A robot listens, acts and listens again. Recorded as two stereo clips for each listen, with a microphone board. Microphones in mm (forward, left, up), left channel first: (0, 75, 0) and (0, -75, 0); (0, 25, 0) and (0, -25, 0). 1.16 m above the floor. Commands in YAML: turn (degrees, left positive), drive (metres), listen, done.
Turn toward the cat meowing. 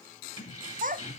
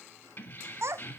listen: true
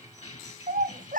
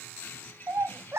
listen: true
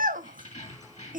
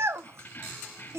done: "I can't make out a cat meowing to turn to."